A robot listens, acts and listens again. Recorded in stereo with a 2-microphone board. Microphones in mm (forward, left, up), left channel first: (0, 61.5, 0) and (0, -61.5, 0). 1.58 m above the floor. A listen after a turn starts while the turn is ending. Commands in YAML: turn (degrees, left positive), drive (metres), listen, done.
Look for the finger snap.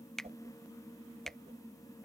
turn: 30
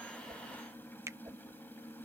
turn: -25
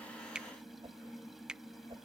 done: "Found it: a finger snap, straight ahead."